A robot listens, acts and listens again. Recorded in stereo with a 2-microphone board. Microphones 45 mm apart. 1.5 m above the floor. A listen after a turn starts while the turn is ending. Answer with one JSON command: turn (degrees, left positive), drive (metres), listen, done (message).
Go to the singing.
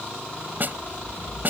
{"listen": true}
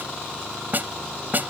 {"listen": true}
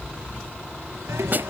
{"turn": -75}
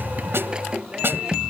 {"turn": -20}
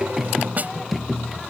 {"drive": 1.0}
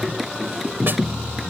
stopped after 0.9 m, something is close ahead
{"done": "Blocked. The singing is further on, straight ahead."}